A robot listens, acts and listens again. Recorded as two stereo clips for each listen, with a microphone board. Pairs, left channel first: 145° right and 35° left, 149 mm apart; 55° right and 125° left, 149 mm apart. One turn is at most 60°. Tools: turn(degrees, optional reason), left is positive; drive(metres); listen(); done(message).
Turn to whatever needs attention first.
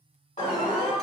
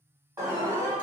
turn(degrees=-60, reason="The alarm: 170° right.")
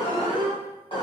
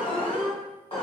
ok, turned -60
turn(degrees=-60, reason="The alarm is now 95° right.")
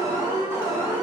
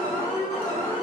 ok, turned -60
turn(degrees=-35, reason="The alarm is now 35° right.")
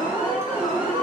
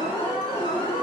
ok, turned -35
done("Found it: an alarm, straight ahead.")